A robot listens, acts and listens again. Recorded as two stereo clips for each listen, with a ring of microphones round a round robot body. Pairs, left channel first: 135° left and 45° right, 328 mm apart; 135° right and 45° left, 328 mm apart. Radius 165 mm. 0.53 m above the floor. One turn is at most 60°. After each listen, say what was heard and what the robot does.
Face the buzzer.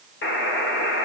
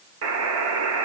The buzzer: 85° left. Turn 60° left.
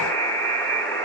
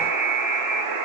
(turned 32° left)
The buzzer is now 50° left. Turn 50° left.
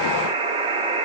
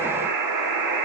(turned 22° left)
The buzzer is now 30° left. Turn 30° left.
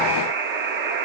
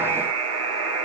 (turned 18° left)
The buzzer is now 10° left. Turn 10° left.
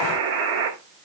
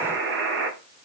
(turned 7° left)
Found it: a buzzer, straight ahead, 1 to 2 m away.